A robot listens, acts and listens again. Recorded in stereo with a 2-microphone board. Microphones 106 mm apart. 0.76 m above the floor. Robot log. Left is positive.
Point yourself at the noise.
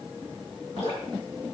cmd yaw +90
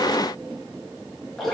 end: Found it: dripping, straight ahead.